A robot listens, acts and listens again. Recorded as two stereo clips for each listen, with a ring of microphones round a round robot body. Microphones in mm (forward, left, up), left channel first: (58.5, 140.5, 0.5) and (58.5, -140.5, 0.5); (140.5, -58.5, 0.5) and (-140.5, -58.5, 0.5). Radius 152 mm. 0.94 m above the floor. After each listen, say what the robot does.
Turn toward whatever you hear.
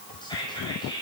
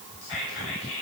Turn 15° left.
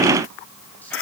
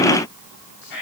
Keep listening.
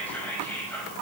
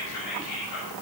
Facing the whispering, over 4 m away.